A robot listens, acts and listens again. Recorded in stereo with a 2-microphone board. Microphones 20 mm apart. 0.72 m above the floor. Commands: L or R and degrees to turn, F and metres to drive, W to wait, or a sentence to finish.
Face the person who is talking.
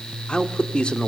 L60
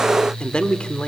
L60
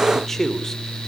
L15
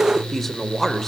L15
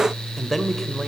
Facing the man speaking.